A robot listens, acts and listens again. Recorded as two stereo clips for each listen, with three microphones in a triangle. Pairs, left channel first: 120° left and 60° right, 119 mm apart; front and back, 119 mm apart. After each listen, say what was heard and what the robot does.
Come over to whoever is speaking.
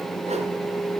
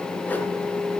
Keep listening.
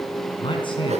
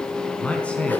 The man speaking: 80° left. Turn 80° left.
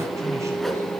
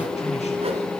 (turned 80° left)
Keep listening.
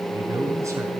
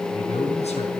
Drive 1.0 m forward.
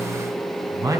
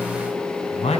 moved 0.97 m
Drive 1.0 m forward.
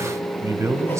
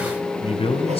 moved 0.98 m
Drive 1.0 m forward.
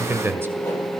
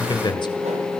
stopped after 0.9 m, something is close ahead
I am next to the man speaking.